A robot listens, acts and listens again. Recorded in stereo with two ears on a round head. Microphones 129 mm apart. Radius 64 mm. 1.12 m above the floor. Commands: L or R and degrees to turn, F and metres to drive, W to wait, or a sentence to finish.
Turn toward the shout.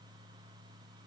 W
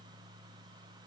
W
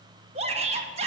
R45
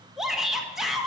Found it: a shout, straight ahead, 1 to 2 m away.